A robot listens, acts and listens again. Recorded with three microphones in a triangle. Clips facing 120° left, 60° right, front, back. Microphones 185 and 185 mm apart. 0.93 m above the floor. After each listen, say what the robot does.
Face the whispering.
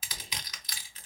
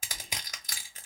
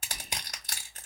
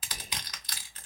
Turn 180° left.
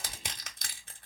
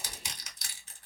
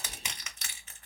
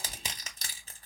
Turn 20° right.
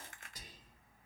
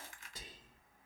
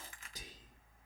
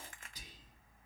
Facing the whispering, 2 to 4 m away.